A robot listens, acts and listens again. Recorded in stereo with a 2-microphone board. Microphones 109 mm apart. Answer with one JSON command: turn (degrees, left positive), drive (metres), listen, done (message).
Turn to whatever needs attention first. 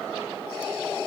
{"listen": true}
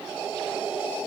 {"listen": true}
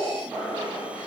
{"done": "I can't make out anything urgent."}